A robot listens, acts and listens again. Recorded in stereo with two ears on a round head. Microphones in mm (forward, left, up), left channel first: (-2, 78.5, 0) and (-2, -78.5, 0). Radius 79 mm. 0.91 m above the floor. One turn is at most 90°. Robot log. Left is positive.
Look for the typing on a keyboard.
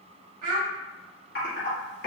note: The typing on a keyboard: about 60° left or 120° left.
cmd yaw +60
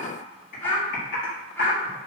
note: So it is at 55° left.
cmd yaw +55
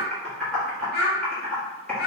end: Found it: typing on a keyboard, straight ahead, 1 to 2 m away.